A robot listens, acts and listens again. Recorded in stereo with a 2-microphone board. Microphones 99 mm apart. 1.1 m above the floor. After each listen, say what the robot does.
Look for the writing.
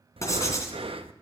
Turn 30° left.
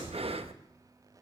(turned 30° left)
Keep listening.
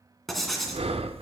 Facing the writing, 2 to 4 m away.